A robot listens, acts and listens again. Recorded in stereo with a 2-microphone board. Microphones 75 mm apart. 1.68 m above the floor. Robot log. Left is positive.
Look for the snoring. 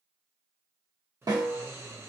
note: The snoring: about 35° right or 145° right.
cmd yaw -35
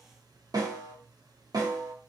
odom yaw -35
note: So it is at 110° right.
cmd yaw -110
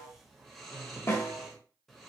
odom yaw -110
end: Facing the snoring.